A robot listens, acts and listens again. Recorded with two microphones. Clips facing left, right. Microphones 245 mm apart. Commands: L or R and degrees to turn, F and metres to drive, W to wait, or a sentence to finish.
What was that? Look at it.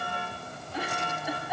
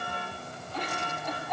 L30
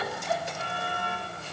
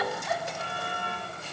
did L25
L145
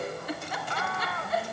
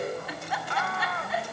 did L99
L45
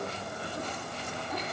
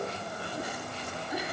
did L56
R10
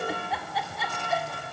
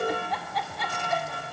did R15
Found it: a giggle, straight ahead, 2 to 4 m away.